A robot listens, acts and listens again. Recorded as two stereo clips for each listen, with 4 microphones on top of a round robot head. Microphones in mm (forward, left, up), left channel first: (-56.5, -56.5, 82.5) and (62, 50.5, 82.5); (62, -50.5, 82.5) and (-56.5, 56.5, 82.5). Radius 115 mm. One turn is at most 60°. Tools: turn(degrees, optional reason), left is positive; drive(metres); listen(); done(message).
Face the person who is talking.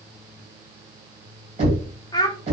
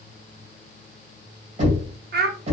turn(degrees=60, reason="The child speaking: 155° left.")
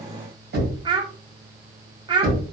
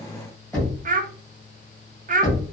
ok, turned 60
turn(degrees=60, reason="The child speaking is now 105° left.")
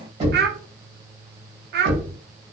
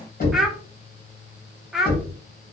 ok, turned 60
turn(degrees=50, reason="The child speaking is now 50° left.")
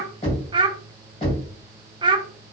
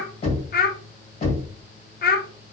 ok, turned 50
turn(degrees=-20, reason="The child speaking is now 20° right.")
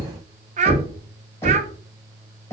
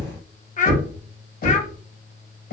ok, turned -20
done("Facing the child speaking, 1 to 2 m away.")